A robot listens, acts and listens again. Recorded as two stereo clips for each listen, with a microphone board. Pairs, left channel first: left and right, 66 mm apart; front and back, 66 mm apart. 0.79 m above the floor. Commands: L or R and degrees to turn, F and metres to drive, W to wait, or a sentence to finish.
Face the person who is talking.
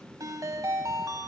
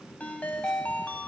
W
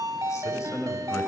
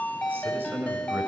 L125
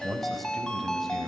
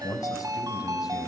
Facing the man speaking.